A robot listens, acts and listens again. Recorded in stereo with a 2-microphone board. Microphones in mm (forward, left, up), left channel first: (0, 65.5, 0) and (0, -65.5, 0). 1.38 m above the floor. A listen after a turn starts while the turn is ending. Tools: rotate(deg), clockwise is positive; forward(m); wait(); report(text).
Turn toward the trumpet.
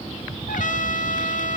rotate(-90)
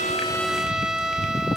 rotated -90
report("Found it: a trumpet, straight ahead, 1 to 2 m away.")